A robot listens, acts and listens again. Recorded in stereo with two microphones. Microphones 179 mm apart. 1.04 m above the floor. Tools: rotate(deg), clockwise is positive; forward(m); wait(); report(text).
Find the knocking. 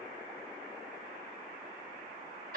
wait()
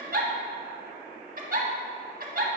wait()
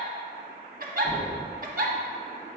rotate(30)
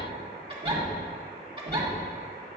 rotate(140)
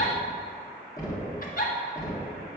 rotate(-15)
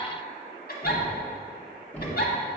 report("Found it: knocking, straight ahead, 1 to 2 m away.")